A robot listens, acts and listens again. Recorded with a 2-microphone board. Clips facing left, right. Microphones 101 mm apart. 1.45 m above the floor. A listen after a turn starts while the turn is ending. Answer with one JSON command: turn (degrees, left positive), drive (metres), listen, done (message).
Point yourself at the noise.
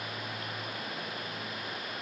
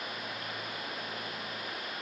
{"listen": true}
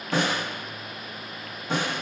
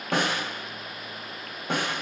{"turn": -55}
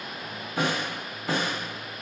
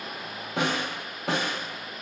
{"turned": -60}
{"turn": -65}
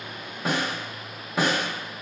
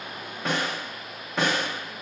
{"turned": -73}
{"done": "Facing the snare drum."}